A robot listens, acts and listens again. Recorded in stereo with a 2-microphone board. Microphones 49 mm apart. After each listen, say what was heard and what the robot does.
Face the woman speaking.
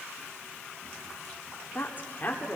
The woman speaking: about 35° left or 145° left. Turn 35° left.
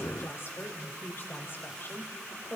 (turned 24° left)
The woman speaking: about 45° left or 135° left. Turn 45° left.
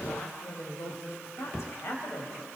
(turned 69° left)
So it is at 70° left. Turn 70° left.
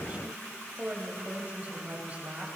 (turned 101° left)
The woman speaking is now 30° right. Turn 30° right.
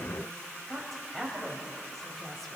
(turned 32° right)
Found it: a woman speaking, straight ahead.